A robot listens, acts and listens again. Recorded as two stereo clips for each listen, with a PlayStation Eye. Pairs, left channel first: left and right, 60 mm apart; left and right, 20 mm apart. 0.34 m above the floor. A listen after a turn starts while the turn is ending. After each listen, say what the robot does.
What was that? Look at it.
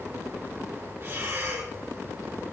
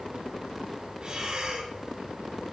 Turn 45° right.
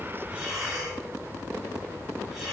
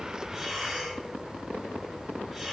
Found it: breathing, straight ahead, 2 to 4 m away.